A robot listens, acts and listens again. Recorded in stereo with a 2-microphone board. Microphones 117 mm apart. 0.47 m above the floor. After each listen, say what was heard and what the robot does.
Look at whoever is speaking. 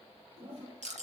Keep listening.
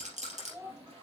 The child speaking: about 20° right or 160° right. Turn 20° right.
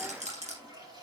Keep listening.
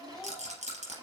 Keep listening.
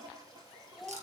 Facing the child speaking.